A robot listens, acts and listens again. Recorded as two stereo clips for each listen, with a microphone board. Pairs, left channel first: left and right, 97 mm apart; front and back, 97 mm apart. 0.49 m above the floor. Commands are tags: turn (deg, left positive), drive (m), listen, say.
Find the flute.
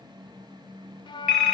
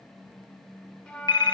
<turn deg="80"/>
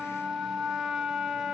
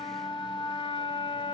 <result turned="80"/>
<say>Facing the flute.</say>